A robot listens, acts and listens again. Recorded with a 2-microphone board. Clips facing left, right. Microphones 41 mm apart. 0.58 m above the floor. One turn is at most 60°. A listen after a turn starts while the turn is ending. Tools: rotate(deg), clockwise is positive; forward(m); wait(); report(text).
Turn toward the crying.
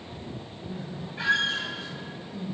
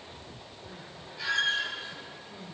rotate(25)
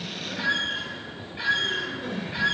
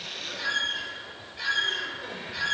report("Facing the crying.")